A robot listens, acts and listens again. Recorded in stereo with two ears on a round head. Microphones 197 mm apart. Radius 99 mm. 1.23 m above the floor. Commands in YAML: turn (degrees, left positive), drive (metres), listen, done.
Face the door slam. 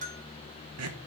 listen: true
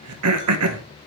listen: true
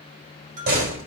turn: -45
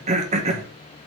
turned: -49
listen: true
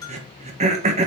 done: "I heard a door slam, but can't make it out now. It was about 5° left or 85° right."